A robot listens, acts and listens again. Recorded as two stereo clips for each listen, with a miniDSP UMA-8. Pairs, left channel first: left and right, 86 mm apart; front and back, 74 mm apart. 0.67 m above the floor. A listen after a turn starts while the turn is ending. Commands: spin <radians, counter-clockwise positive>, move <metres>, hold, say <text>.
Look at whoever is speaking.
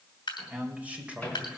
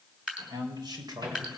spin -2.97
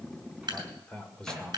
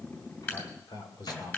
say Facing the man speaking.